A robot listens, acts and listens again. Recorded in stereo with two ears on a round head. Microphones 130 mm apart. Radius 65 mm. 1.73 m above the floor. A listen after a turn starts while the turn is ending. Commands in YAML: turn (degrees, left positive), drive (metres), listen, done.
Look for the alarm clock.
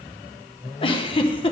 listen: true
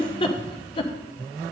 listen: true
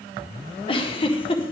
done: "I can't make out an alarm clock, only a giggle."